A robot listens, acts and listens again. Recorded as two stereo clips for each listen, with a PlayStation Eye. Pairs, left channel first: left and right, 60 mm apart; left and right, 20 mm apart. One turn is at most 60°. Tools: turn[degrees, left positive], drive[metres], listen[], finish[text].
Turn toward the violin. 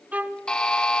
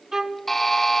Thought: The violin: about 25° right or 155° right.
Action: turn[-25]
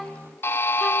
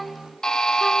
Action: finish[Facing the violin, under 1 m away.]